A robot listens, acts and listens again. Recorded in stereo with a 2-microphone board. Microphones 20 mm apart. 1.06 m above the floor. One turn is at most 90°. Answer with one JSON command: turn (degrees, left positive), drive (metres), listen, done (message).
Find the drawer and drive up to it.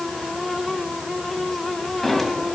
{"turn": 20}
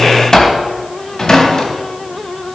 {"turn": 90}
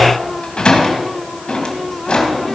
{"turn": 55}
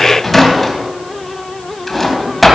{"drive": 1.0}
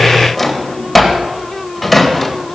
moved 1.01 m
{"drive": 1.0}
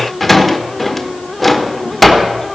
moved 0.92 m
{"drive": 1.0}
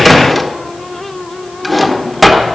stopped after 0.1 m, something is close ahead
{"done": "Arrived at the drawer, straight ahead."}